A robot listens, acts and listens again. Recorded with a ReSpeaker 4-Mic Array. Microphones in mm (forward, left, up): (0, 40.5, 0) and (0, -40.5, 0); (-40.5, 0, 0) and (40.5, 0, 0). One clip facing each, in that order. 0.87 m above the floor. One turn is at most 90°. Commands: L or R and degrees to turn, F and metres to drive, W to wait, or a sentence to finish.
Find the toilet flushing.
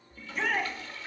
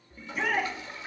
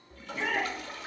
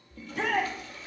R90
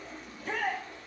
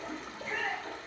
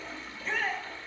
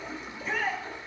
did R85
R70
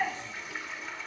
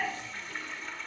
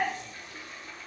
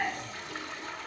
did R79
Found it: a toilet flushing, straight ahead.